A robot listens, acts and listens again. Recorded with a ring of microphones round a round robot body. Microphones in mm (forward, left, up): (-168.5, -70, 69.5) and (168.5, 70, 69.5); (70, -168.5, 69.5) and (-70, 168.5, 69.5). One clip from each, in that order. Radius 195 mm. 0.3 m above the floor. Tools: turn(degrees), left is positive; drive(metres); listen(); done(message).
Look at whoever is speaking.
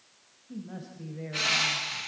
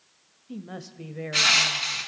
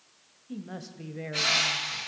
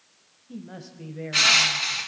turn(degrees=10)
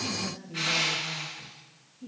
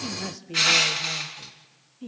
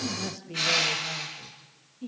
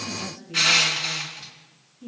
done("Facing the woman speaking.")